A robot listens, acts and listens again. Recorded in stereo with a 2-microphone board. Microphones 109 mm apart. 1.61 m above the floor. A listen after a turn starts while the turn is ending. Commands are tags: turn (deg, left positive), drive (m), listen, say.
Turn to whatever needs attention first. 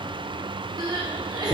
<turn deg="-40"/>
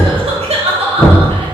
<turn deg="-105"/>
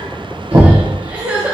<turn deg="-10"/>
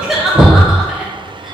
<say>Found it: crying, straight ahead.</say>